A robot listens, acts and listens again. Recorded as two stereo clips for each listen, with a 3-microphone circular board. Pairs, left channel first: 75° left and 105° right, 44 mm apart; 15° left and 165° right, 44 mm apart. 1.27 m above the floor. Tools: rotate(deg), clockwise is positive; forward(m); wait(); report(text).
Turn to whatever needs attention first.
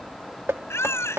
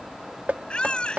rotate(-80)
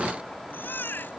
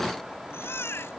rotate(-35)
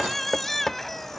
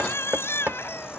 rotate(10)
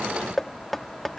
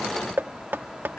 wait()
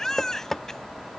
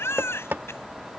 report("Found it: a baby crying, straight ahead.")